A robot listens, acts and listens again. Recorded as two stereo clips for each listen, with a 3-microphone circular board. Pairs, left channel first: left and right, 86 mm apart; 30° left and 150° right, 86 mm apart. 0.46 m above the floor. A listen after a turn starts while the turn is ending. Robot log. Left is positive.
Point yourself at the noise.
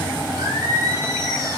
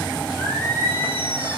note: The singing: 35° right.
cmd yaw -35
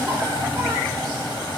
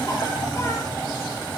cmd idle
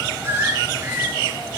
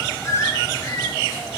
note: The singing is now 25° right.
cmd yaw -25
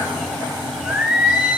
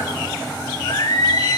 note: The singing is now 10° right.
cmd yaw -10
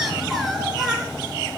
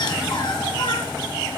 end: Facing the singing.